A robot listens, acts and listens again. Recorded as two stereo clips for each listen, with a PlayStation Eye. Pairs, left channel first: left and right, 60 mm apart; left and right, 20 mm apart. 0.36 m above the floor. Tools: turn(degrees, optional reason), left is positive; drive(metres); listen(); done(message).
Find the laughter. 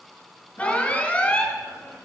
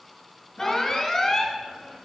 turn(degrees=50, reason="The laughter: about 50° left or 130° left.")
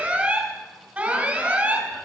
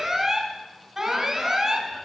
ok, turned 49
listen()
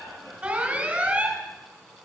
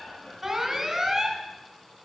turn(degrees=70, reason="So it is at 70° left.")
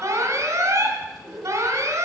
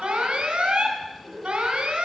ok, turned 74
done("Found it: laughter, straight ahead.")